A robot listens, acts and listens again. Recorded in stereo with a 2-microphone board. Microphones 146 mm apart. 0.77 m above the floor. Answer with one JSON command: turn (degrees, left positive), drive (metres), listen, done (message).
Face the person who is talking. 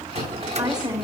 {"turn": -25}
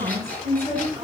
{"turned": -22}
{"turn": -130}
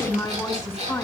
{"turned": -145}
{"turn": 15}
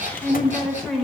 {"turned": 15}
{"done": "Facing the woman speaking."}